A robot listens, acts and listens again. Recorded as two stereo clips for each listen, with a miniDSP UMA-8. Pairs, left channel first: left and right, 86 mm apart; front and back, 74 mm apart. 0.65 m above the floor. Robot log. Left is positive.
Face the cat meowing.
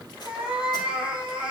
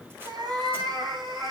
note: The cat meowing: 170° right.
cmd yaw -170
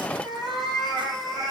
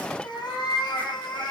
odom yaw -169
end: Facing the cat meowing, 2 to 4 m away.